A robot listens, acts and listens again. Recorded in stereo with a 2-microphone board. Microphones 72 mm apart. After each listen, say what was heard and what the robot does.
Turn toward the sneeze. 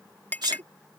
Turn 90° right.
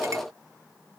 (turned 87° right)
Facing where the sneeze came from. I can't hear it now.